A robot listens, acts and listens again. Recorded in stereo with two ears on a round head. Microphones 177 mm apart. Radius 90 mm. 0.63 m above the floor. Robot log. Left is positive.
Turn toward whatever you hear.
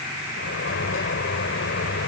note: The sliding door: about 60° left or 120° left.
cmd yaw +60
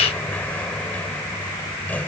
note: So it is at 10° left.
cmd yaw +10
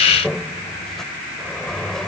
end: Found it: a sliding door, straight ahead.